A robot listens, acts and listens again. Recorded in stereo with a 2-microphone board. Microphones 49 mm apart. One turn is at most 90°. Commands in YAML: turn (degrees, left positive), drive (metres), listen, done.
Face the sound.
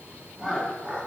turn: -25
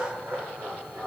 turn: -90
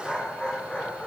turn: 30
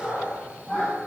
turn: 30
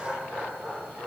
turn: -10
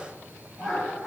done: "Found it: laughter, straight ahead, over 4 m away."